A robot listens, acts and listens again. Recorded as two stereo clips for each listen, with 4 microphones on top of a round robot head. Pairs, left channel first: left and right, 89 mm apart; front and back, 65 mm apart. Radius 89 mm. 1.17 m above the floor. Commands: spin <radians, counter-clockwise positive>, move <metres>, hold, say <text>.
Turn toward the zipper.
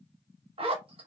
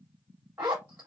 spin -1.92
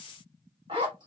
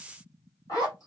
spin -0.79
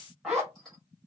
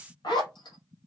say Facing the zipper.